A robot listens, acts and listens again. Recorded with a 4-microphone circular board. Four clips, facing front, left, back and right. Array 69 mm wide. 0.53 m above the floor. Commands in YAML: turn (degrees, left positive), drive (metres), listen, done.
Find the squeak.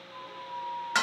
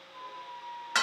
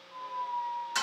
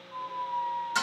turn: -105
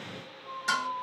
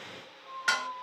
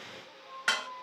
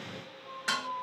done: "Found it: a squeak, straight ahead."